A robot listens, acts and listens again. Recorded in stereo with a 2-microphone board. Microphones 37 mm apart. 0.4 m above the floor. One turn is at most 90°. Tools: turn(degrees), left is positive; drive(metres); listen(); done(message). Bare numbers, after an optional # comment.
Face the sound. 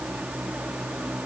listen()
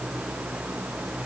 listen()
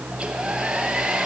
# The hair dryer: about 20° right or 160° right.
turn(-20)
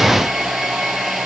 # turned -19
done("Found it: a hair dryer, straight ahead.")